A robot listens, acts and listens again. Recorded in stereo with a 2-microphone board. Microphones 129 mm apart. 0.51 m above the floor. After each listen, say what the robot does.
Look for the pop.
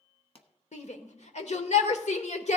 Turn 50° left.
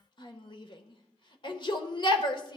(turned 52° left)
Keep listening.
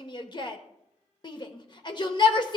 I heard a pop, but can't make it out now. It was about 5° right or 80° left.